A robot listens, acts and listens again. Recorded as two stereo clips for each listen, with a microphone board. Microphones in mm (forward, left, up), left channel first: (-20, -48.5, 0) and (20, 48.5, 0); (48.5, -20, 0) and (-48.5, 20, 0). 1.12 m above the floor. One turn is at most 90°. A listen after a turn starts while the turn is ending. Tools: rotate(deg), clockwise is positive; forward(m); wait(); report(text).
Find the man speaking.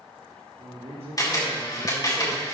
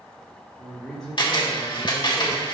rotate(-60)
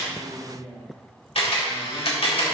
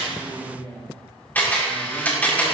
rotate(-25)
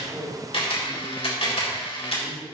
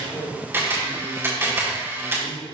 rotate(15)
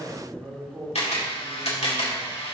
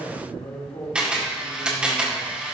report("Found it: a man speaking, straight ahead, 2 to 4 m away.")